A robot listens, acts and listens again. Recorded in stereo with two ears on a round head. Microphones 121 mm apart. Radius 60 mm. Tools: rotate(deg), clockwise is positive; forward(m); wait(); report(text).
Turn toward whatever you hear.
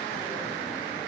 wait()
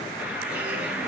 rotate(30)
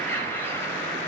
rotate(-20)
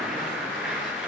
report("Facing the bird.")